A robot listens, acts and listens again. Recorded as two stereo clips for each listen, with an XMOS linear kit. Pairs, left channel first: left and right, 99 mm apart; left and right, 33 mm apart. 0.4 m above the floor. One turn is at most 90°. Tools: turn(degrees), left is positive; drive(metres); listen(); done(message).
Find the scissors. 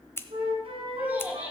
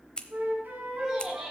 turn(degrees=25)
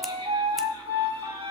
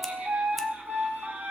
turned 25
listen()
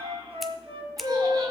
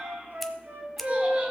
done("Found it: scissors, straight ahead, under 1 m away.")